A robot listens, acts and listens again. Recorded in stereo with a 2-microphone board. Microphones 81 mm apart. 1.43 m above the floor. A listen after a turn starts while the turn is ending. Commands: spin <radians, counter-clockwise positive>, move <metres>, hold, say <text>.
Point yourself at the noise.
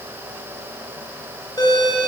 spin 0.96
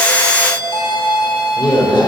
spin 1.22
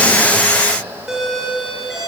say Found it: a doorbell, straight ahead.